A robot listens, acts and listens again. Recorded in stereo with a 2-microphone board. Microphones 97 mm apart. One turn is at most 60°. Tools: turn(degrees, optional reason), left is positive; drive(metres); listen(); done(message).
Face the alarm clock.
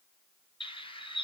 listen()
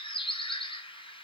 listen()
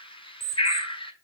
turn(degrees=-30, reason="The alarm clock: about 30° right or 150° right.")
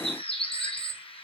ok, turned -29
listen()
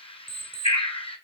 turn(degrees=-60, reason="So it is at 120° right.")
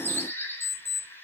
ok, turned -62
turn(degrees=-60, reason="The alarm clock is now 60° right.")
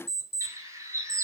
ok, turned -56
done("Found it: an alarm clock, straight ahead.")